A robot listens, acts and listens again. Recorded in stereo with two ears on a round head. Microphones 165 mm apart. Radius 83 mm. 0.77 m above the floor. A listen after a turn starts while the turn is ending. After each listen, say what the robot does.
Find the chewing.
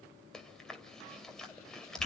Turn 30° left.
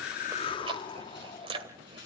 Turn 25° right.
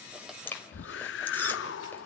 Turn 10° left.
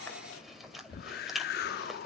Found it: chewing, straight ahead.